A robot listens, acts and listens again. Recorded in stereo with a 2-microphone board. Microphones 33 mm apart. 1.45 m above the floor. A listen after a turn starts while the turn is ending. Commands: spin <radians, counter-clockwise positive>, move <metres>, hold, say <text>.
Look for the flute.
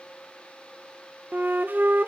spin -1.22
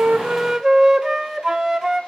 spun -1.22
spin -0.26
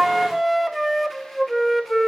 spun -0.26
say Facing the flute, under 1 m away.